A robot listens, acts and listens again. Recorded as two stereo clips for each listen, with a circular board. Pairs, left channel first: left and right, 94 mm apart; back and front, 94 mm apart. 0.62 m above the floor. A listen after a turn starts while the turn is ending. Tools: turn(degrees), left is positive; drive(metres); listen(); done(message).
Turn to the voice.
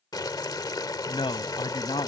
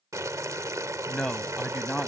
turn(degrees=90)
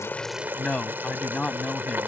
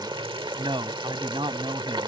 turn(degrees=10)
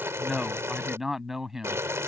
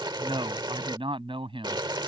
done("Facing the man speaking.")